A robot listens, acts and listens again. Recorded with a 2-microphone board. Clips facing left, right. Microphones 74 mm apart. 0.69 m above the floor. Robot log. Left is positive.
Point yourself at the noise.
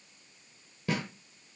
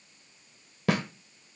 cmd yaw -90
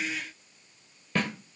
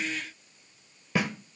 end: Found it: a snare drum, straight ahead.